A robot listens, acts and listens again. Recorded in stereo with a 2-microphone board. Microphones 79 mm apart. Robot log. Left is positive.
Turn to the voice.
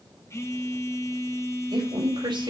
cmd yaw -90
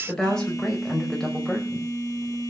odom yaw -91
end: Found it: a woman speaking, straight ahead, over 4 m away.